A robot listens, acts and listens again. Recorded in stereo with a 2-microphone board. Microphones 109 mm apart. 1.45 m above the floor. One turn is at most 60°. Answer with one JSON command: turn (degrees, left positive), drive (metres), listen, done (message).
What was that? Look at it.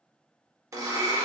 {"turn": -30}
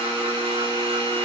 {"turn": -60}
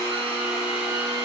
{"turn": -55}
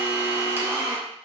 {"turn": -20}
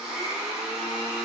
{"done": "Found it: a blender, straight ahead, under 1 m away."}